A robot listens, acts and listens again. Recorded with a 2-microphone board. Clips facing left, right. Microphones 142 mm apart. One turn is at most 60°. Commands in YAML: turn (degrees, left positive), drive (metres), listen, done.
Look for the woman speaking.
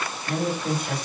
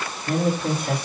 turn: -60
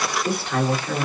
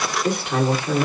turn: -20
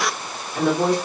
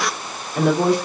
turn: -10
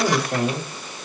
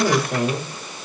done: "Found it: a woman speaking, straight ahead, 2 to 4 m away."